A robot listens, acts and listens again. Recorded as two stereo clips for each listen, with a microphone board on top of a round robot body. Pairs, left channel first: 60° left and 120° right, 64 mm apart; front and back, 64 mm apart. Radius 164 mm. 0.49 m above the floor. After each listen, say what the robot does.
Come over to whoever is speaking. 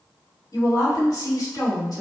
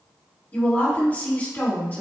Turn 60° left.
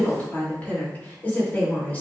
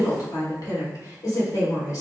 Drive 1.0 m forward.
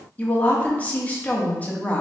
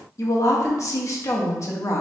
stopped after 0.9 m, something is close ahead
I am next to the woman speaking.